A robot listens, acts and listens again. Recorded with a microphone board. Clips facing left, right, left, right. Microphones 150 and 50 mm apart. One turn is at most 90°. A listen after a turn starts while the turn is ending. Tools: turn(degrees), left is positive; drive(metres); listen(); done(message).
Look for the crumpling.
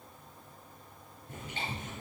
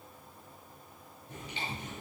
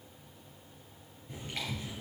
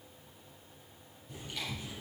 listen()
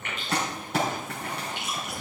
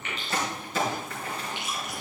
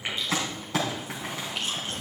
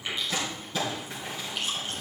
turn(degrees=90)
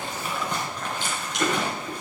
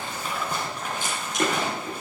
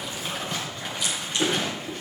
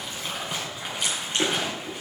turn(degrees=-10)
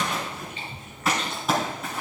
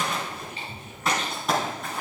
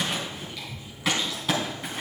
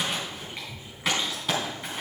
done("Facing the crumpling, over 4 m away.")